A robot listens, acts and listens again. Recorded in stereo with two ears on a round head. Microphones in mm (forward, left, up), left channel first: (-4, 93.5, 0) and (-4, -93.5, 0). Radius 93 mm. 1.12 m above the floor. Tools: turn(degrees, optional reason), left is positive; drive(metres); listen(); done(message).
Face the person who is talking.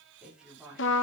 turn(degrees=-30)
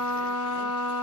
listen()
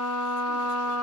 listen()
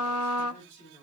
turn(degrees=25, reason="So it is at 25° left.")
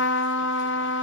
listen()
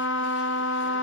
listen()
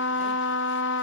done("Facing where the woman speaking came from. I can't hear it now.")